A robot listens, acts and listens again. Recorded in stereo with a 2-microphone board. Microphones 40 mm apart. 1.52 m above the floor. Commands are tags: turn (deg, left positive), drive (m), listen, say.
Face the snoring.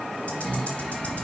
<turn deg="30"/>
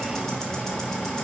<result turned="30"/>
<turn deg="135"/>
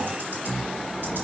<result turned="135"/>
<say>Facing the snoring, 1 to 2 m away.</say>